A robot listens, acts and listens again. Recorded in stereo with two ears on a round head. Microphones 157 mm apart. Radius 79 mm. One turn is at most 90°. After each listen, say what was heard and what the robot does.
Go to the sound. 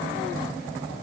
Keep listening.
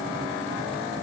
Keep listening.
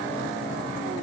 I can't make out anything.